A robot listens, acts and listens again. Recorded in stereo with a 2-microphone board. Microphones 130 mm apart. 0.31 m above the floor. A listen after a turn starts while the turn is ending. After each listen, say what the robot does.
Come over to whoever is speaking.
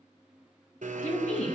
Turn 90° left.
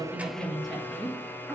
Drive 1.0 m forward.
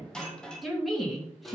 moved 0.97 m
Drive 1.0 m forward.
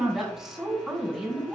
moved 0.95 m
Drive 1.0 m forward.
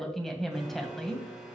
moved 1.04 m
Drive 1.0 m forward.
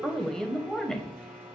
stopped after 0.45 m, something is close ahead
I am next to the woman speaking.